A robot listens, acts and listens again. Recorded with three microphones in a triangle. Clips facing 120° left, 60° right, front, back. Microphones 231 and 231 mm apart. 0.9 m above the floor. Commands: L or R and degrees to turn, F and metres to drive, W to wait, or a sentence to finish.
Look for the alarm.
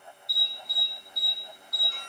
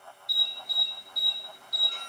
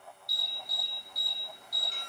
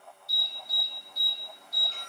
R75
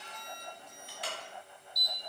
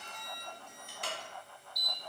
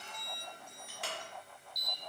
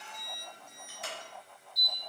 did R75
R15
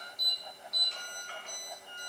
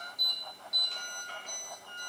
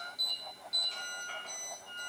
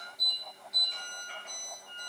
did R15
Facing the alarm.